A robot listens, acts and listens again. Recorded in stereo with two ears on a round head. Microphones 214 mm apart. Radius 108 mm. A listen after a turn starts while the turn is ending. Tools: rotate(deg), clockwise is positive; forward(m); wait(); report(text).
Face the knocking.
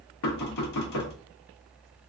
rotate(-90)
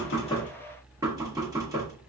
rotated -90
rotate(15)
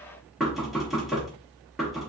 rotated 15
report("Facing the knocking, under 1 m away.")